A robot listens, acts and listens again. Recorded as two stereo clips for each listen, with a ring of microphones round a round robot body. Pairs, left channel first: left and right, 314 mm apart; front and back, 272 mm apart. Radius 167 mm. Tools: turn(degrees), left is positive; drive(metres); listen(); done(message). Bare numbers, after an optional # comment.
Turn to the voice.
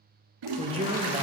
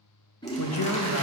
# The man speaking: 20° right.
turn(-20)
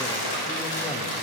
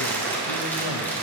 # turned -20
listen()
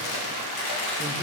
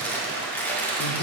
listen()
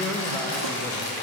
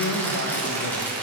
done("Found it: a man speaking, straight ahead.")